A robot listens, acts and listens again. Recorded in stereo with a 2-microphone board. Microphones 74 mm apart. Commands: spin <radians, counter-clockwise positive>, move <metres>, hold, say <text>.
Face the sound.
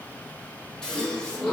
spin 0.52
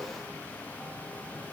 hold
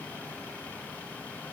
say I heard a gasp, but can't make it out now. It was about 20° right or 140° left.